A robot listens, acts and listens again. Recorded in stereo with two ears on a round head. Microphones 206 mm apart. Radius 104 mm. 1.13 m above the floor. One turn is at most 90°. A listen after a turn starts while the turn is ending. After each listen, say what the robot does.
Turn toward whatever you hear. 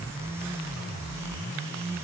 Keep listening.
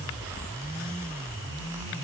Keep listening.
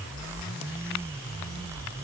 I can't make out anything to turn to.